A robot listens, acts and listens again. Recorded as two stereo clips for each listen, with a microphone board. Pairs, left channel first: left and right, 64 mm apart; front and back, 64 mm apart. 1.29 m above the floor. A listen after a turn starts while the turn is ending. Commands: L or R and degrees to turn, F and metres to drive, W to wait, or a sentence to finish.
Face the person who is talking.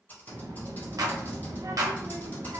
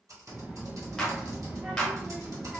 R110
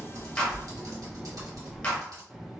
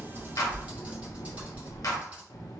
R10
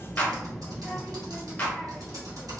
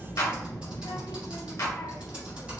Found it: a child speaking, straight ahead.